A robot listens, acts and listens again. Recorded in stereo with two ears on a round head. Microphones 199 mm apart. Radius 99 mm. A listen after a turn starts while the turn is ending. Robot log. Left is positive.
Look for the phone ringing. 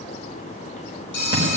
note: The phone ringing: about 55° left or 125° left.
cmd yaw +55
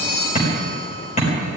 cmd idle
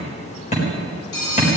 note: So it is at 65° left.
cmd yaw +65
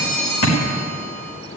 note: The phone ringing is now 15° left.
cmd yaw +15
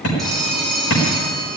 end: Facing the phone ringing.